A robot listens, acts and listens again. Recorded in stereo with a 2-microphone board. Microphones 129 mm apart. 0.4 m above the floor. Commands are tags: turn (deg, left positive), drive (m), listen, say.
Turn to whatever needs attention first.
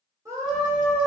<turn deg="-25"/>
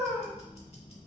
<say>Facing the scream.</say>